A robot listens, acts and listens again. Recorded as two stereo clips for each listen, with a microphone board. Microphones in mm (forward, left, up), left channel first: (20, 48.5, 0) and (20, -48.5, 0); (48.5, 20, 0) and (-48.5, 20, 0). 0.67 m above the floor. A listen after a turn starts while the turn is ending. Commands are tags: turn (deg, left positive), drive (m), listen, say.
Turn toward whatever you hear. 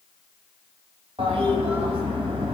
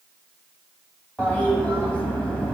<turn deg="-75"/>
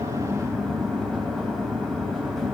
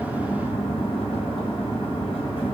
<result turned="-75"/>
<say>Facing the toilet flushing.</say>